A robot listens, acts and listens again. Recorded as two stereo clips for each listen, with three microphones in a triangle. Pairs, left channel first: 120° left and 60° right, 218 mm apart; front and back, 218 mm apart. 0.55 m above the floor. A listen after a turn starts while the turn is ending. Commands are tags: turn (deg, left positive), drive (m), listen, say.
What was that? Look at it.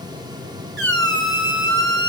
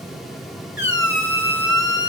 <turn deg="-30"/>
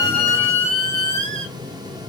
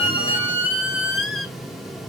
<say>Facing the squeak.</say>